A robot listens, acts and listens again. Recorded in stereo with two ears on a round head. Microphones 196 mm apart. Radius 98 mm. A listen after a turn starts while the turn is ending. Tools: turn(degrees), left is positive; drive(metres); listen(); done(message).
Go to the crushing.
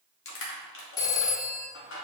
turn(degrees=65)
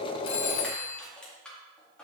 drive(metres=1.0)
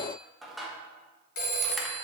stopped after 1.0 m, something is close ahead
done("Arrived at the crushing, straight ahead.")